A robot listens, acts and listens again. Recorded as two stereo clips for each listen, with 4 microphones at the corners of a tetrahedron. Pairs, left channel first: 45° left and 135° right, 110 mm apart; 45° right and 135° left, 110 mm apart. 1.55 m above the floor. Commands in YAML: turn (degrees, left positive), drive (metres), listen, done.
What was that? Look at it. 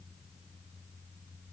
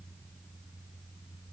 listen: true
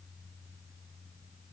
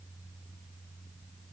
listen: true
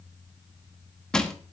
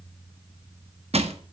turn: 130
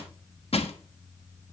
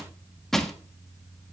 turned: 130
turn: 40
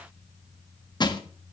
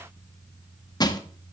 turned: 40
done: "Found it: crushing, straight ahead, 1 to 2 m away."